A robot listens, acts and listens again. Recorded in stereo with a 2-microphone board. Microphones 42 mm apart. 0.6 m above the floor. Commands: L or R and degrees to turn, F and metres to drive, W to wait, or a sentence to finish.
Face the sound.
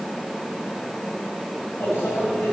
L90
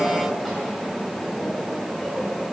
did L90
L10
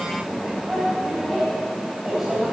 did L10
Found it: a microwave, straight ahead, 2 to 4 m away.